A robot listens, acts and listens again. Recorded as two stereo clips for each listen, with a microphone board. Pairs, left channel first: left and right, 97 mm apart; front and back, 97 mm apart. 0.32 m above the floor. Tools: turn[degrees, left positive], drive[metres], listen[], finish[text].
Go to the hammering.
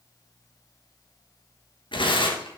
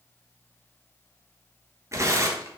Action: listen[]
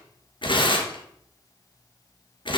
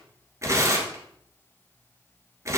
Action: listen[]
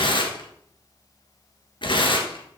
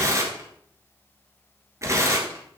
Action: finish[I can't make out hammering, only tearing paper.]